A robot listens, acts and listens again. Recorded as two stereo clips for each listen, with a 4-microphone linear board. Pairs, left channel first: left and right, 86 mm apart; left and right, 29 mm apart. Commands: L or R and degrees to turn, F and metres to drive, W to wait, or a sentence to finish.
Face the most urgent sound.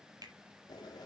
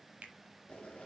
W
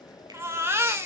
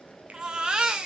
R30
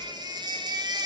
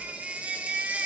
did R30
R125
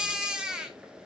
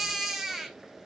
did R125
R10
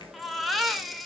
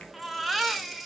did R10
Facing the baby crying.